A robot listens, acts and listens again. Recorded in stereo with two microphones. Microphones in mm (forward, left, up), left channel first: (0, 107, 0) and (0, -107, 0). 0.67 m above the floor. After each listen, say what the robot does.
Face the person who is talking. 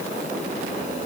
Keep listening.
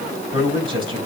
Turn 25° right.
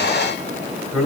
Facing the man speaking, over 4 m away.